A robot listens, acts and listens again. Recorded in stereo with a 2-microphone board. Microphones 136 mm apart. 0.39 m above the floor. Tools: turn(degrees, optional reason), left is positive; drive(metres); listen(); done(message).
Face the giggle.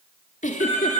turn(degrees=90)
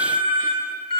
listen()
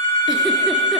listen()
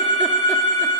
done("Facing where the giggle came from. I can't hear it now.")